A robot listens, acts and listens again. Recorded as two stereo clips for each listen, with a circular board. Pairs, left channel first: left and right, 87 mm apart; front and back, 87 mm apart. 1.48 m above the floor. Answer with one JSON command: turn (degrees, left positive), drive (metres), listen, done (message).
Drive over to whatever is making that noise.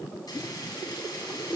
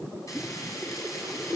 {"listen": true}
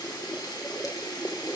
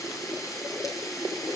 {"turn": 50}
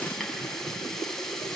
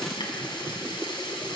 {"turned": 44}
{"drive": 1.0}
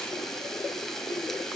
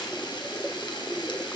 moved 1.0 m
{"drive": 1.0}
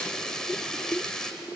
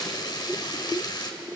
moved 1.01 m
{"drive": 1.0}
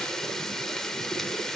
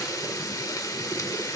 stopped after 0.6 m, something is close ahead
{"done": "Arrived at the frying, straight ahead."}